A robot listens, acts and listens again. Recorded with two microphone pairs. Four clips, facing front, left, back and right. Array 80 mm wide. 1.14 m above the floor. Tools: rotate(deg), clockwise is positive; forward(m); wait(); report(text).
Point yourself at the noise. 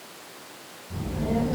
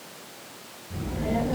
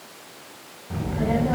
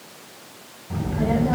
rotate(135)
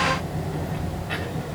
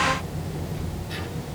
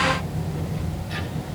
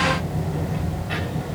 rotate(50)
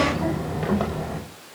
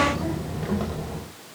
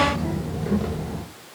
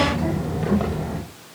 rotate(25)
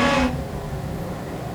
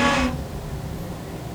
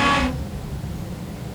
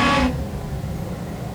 rotate(10)
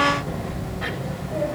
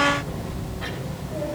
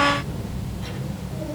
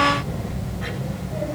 report("Facing the child speaking, over 4 m away.")